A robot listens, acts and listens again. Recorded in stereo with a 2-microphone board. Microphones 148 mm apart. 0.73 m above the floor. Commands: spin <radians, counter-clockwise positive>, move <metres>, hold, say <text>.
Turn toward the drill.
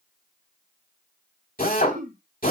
spin 1.57
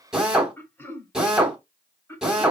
say Found it: a drill, straight ahead.